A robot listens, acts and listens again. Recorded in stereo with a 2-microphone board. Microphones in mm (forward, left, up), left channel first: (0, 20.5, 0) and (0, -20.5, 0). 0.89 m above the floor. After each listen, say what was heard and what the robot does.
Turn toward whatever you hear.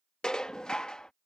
The dishes clattering: about 20° left or 160° left. Turn 20° left.
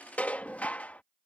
So it is at 145° left. Turn 145° left.
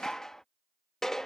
The dishes clattering is now 10° left. Turn 10° left.
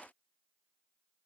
Keep listening.
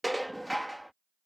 Facing the dishes clattering.